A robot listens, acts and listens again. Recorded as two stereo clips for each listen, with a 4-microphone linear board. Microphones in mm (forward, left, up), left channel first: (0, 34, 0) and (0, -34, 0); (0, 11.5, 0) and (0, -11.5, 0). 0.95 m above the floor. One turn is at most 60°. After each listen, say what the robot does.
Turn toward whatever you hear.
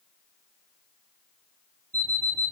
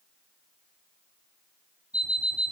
Turn 60° right.
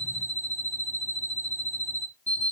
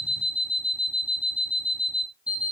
Turn 60° right.
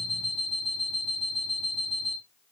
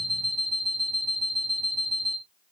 Facing the alarm clock, 2 to 4 m away.